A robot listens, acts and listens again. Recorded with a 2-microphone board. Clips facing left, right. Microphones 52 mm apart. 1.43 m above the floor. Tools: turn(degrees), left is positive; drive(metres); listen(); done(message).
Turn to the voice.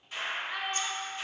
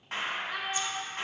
turn(degrees=15)
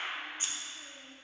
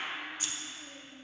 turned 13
listen()
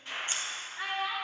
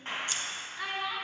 turn(degrees=150)
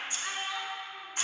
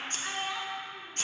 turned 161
turn(degrees=-10)
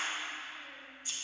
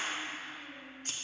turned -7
listen()
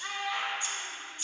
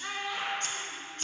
done("Facing the child speaking, 1 to 2 m away.")